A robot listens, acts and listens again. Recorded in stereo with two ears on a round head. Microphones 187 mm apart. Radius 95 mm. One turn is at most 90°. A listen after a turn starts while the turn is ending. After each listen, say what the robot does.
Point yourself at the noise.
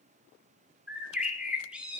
Turn 30° right.
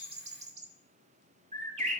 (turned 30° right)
Turn 90° right.
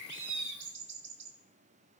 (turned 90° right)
Turn 55° right.
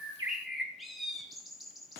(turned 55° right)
Facing the bird, 1 to 2 m away.